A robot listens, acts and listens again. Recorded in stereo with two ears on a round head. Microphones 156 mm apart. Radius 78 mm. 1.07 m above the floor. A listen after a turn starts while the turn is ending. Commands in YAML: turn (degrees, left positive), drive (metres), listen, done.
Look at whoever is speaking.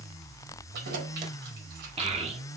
turn: -35
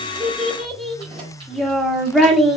done: "Found it: a child speaking, straight ahead, 2 to 4 m away."